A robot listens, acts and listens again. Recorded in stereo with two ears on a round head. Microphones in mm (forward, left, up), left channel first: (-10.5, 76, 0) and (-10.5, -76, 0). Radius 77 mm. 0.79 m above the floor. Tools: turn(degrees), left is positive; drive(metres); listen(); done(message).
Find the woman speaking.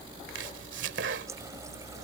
listen()
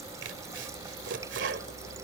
listen()
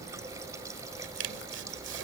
done("I can't make out a woman speaking to turn to.")